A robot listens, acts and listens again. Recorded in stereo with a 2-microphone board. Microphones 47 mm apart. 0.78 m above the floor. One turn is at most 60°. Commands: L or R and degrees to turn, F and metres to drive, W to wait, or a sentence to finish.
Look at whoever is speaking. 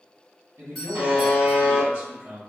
R60
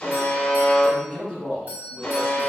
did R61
Found it: a man speaking, straight ahead.